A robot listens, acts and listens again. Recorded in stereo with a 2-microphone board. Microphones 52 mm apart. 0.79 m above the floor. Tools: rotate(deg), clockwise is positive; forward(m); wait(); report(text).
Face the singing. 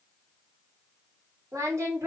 rotate(90)
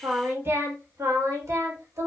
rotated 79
rotate(70)
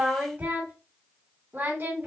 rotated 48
rotate(50)
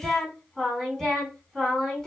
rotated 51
report("Facing the singing, 1 to 2 m away.")